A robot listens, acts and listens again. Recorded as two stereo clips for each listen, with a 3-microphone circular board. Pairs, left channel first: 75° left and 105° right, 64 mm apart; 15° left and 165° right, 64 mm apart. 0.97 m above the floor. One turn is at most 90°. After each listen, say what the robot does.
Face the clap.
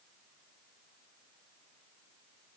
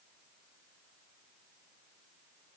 Keep listening.
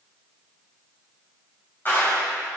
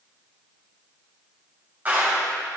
Turn 90° left.
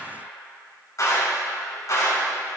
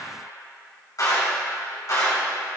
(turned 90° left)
Turn 40° left.
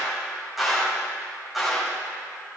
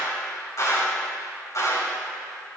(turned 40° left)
Turn 15° right.
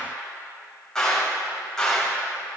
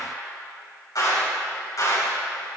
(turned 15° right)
Facing the clap, 2 to 4 m away.